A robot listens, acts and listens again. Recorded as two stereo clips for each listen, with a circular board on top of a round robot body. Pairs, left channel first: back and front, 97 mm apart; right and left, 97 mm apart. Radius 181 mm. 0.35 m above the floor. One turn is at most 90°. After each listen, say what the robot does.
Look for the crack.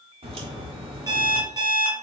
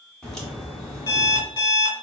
Found it: a crack, straight ahead, 2 to 4 m away.